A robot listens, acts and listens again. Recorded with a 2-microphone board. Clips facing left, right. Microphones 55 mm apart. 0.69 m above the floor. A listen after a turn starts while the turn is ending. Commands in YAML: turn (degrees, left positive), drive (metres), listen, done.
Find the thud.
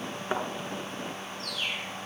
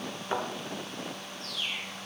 turn: 20
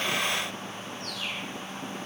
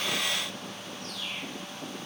listen: true
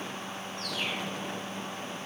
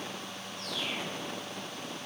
done: "I heard a thud, but can't make it out now. It was about straight ahead or 140° left."